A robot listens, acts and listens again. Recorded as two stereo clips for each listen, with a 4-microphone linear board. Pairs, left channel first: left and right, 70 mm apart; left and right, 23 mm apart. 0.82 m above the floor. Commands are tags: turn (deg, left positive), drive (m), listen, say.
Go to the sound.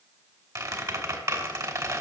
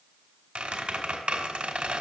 <turn deg="-55"/>
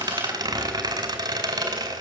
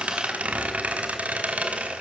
<turn deg="-75"/>
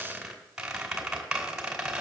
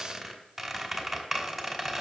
<drive m="1.0"/>
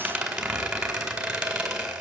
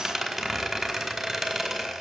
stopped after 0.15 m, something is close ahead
<say>Something is in my way. I am facing the squeak but have not reached it.</say>